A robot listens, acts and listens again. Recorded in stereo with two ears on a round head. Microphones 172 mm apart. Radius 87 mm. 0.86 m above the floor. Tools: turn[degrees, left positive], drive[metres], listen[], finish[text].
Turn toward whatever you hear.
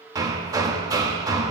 Thought: The hammering: about 20° right or 160° right.
Action: turn[-20]
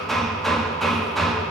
Action: finish[Found it: hammering, straight ahead.]